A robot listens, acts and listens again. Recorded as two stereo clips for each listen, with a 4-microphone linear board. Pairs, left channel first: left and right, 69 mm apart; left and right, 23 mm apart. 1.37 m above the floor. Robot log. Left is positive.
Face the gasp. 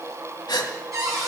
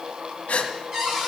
cmd yaw +90
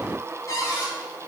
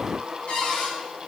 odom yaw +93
end: I heard a gasp from this way, but can't make it out now.